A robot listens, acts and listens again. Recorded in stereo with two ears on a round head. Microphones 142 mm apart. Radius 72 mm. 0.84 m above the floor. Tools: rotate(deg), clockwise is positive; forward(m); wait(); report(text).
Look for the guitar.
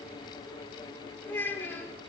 wait()
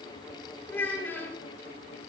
wait()
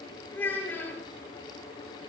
report("I can't make out a guitar to turn to.")